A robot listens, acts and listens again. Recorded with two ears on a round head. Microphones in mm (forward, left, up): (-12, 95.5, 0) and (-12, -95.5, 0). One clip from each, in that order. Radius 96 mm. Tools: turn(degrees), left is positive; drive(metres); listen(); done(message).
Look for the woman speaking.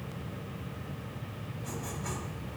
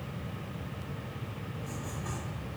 listen()
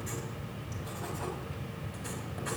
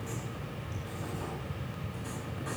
listen()
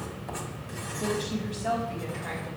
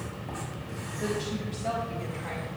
turn(degrees=-30)
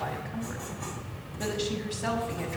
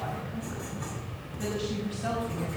turn(degrees=20)
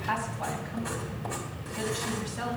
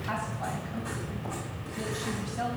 done("Found it: a woman speaking, straight ahead.")